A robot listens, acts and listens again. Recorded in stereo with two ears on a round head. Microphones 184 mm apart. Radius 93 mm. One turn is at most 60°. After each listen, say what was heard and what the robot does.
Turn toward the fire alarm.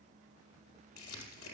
Keep listening.
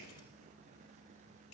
Keep listening.
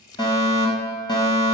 The fire alarm: about 20° left or 160° left. Turn 20° left.
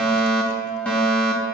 Found it: a fire alarm, straight ahead.